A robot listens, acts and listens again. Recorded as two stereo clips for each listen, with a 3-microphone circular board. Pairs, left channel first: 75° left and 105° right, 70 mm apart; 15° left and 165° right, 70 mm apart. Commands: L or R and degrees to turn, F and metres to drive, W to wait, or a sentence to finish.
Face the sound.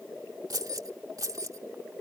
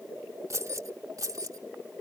R135
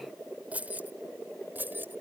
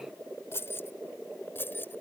R45
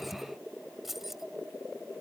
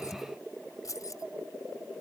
R20
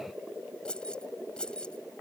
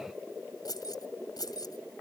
Found it: keys jangling, straight ahead.